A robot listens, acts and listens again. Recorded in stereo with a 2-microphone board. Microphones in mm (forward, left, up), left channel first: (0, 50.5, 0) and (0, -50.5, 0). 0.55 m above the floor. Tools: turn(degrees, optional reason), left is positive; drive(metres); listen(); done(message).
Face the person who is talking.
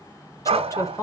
turn(degrees=35, reason="The woman speaking: about 35° left or 145° left.")
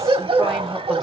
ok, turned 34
listen()
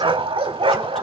listen()
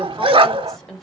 done("Found it: a woman speaking, straight ahead, 1 to 2 m away.")